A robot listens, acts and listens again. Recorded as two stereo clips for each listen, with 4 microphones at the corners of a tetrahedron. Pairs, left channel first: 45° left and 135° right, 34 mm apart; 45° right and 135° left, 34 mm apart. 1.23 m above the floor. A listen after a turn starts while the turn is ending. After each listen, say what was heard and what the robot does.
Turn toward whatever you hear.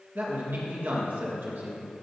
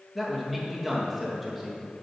The man speaking: 140° right. Turn 140° right.
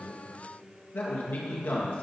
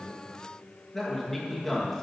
The man speaking is now 35° left. Turn 35° left.
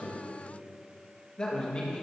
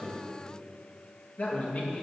The man speaking is now 15° right. Turn 15° right.
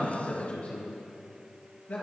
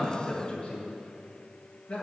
Found it: a man speaking, straight ahead, 1 to 2 m away.